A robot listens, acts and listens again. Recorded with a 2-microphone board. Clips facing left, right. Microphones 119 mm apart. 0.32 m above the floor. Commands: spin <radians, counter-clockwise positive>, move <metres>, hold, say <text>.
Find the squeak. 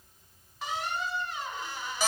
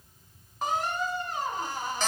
spin -0.79
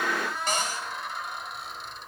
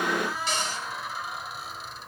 say Found it: a squeak, straight ahead.